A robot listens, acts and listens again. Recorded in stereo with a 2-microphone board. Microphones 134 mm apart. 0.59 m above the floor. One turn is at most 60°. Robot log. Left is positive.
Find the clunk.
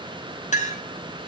cmd idle
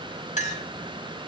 cmd idle
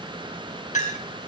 end: I can't make out a clunk to turn to.